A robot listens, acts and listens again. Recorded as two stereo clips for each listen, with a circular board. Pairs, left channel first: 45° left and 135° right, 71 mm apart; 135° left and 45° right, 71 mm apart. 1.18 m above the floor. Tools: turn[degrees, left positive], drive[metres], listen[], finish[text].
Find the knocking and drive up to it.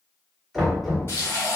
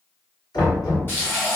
Thought: The knocking: 135° left.
Action: turn[135]
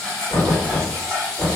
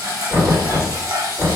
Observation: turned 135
Thought: The knocking is now 10° left.
Action: turn[10]
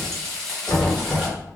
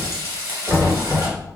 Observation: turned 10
Action: drive[1.0]
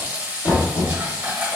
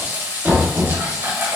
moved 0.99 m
Thought: The knocking is now 10° left.
Action: turn[10]
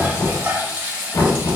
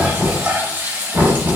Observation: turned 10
Action: drive[1.0]
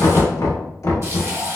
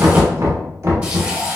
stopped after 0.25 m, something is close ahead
Action: finish[Arrived at the knocking, straight ahead.]